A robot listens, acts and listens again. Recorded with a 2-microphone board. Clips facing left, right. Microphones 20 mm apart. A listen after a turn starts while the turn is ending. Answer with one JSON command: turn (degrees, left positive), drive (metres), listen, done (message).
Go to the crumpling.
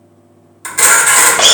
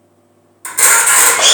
{"listen": true}
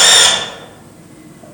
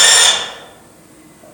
{"listen": true}
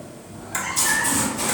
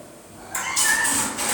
{"turn": -35}
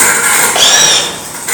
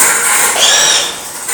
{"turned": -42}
{"drive": 1.0}
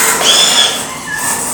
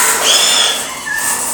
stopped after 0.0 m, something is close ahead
{"done": "Blocked. The crumpling is further on, straight ahead."}